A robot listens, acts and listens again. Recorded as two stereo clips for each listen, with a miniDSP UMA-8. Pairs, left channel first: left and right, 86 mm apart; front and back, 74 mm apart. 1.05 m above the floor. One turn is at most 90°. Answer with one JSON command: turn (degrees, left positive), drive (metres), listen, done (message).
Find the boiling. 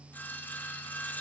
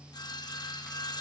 {"listen": true}
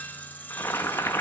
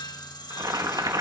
{"turn": 90}
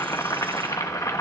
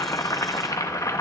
{"turn": 40}
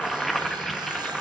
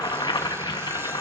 {"done": "Facing the boiling."}